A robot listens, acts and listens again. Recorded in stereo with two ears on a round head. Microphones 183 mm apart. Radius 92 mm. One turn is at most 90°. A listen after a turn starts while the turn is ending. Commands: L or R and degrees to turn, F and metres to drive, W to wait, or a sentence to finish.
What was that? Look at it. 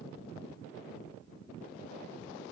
W
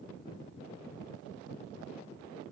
W
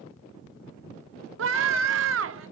R70
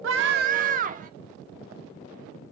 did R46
R45
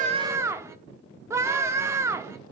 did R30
R15
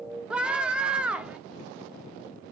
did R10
Found it: a scream, straight ahead, 1 to 2 m away.